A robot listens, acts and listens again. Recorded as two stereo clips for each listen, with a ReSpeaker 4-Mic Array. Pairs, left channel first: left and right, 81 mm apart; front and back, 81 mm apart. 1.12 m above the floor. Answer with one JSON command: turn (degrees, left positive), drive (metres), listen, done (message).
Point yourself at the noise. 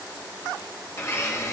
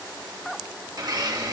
{"turn": 145}
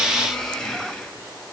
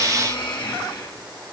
{"done": "Found it: a blender, straight ahead, 1 to 2 m away."}